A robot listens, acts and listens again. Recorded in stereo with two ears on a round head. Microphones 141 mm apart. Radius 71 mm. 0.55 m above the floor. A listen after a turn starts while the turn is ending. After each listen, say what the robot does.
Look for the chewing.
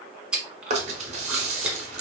Turn 30° right.
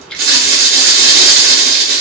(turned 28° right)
Keep listening.
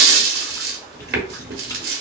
Keep listening.
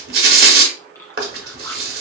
I heard chewing, but can't make it out now. It was about 20° left or 145° right.